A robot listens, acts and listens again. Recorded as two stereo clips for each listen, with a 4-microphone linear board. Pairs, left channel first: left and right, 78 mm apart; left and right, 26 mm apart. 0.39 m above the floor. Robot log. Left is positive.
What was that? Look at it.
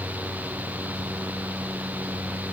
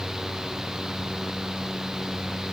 cmd idle
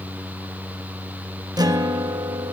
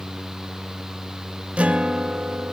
note: The guitar: about 55° right or 125° right.
cmd yaw -55
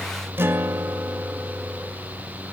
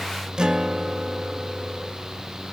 note: So it is at 35° right.
cmd yaw -35
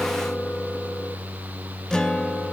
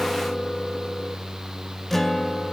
note: The guitar is now 10° left.
cmd yaw +10
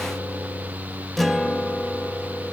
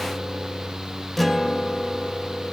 end: Found it: a guitar, straight ahead.